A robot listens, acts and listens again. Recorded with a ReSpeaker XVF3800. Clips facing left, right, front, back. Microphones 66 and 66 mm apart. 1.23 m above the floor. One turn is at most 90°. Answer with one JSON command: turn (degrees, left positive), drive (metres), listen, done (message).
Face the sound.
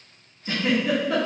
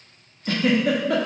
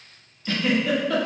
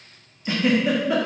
{"turn": -90}
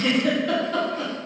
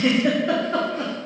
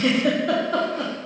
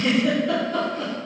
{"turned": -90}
{"turn": -25}
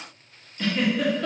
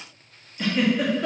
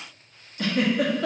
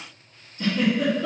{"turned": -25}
{"turn": -10}
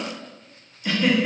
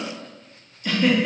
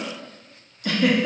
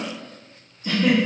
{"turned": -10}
{"done": "Found it: a giggle, straight ahead, under 1 m away."}